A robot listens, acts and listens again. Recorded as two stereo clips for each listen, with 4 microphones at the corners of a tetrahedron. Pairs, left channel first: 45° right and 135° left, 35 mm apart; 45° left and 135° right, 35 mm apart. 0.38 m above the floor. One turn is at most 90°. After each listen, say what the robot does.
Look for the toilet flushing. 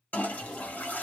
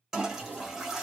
Turn 60° right.
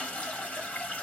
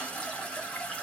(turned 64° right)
Found it: a toilet flushing, straight ahead.